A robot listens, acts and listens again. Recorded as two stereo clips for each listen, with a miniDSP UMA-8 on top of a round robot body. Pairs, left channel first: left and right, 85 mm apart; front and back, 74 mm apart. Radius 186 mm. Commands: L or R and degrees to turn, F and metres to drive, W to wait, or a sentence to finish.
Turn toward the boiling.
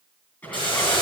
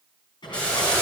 L75
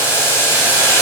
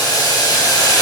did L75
L30
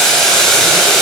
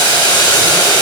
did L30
Facing the boiling, over 4 m away.